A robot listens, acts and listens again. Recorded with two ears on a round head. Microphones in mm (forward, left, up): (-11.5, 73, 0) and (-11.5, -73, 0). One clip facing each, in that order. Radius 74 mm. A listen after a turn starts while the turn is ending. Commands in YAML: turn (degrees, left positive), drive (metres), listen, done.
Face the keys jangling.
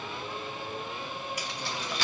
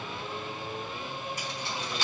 turn: 65
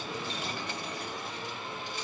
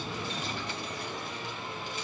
listen: true
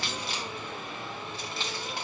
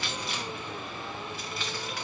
turn: 25
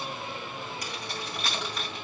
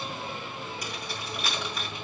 done: "Found it: keys jangling, straight ahead, 2 to 4 m away."